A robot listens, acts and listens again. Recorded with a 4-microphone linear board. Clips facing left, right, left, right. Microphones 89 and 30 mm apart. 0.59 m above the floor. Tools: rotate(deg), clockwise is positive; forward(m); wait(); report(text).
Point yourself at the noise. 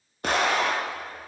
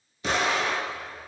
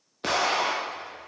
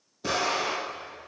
rotate(-55)
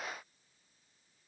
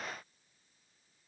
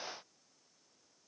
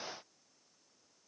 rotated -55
wait()
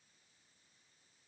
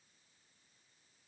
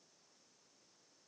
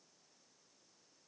report("I heard an explosion, but can't make it out now. It was about straight ahead or 70° left.")